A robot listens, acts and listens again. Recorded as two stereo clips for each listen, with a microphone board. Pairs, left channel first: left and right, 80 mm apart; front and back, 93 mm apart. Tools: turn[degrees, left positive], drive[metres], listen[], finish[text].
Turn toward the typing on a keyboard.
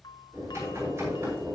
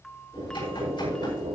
Thought: The typing on a keyboard: 30° right.
Action: turn[-30]
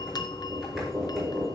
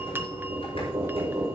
Action: finish[Found it: typing on a keyboard, straight ahead.]